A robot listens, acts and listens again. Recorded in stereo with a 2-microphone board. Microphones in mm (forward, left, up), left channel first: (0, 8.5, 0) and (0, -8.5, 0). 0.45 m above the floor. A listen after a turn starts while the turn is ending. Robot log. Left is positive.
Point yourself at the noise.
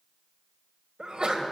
note: The sneeze: about 55° right or 125° right.
cmd yaw -55
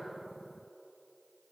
cmd idle
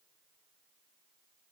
end: I heard a sneeze, but can't make it out now. It was about straight ahead or 70° right.